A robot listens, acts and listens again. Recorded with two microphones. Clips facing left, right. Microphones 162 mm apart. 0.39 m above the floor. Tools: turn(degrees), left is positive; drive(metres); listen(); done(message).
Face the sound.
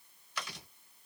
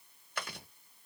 turn(degrees=-50)
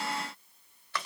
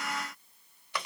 turn(degrees=-20)
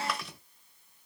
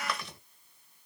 done("Found it: chewing, straight ahead, 1 to 2 m away.")